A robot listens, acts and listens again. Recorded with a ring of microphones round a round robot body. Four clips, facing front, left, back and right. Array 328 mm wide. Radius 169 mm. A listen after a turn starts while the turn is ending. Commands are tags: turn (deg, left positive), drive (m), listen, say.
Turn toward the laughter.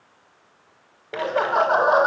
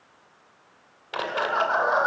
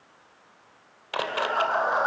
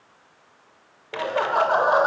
<turn deg="-25"/>
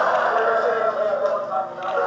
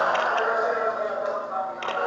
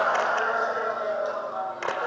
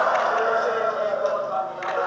<turn deg="-15"/>
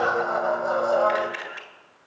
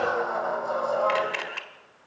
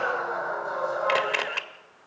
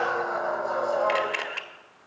<say>Found it: laughter, straight ahead, over 4 m away.</say>